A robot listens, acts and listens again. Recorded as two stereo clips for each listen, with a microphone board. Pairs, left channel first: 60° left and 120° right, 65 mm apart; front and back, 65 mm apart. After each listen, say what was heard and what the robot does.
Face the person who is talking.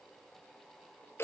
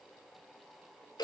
Keep listening.
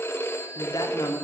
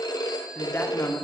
The woman speaking: 50° left. Turn 50° left.
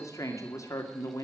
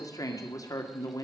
The woman speaking is now 25° left. Turn 25° left.
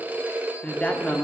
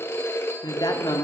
The woman speaking is now 10° right. Turn 10° right.
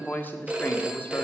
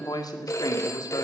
Facing the woman speaking, 2 to 4 m away.